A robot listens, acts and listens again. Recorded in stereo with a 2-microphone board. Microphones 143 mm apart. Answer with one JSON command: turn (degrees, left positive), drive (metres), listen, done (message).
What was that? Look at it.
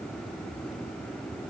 {"listen": true}
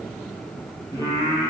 {"turn": 25}
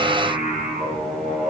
{"done": "Found it: singing, straight ahead."}